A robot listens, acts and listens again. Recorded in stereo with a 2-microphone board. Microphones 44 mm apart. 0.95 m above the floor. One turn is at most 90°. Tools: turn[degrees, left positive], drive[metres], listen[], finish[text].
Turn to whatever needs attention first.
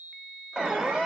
Thought: The alarm: about 20° right or 160° right.
Action: turn[-20]
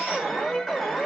Action: finish[Found it: an alarm, straight ahead, 2 to 4 m away.]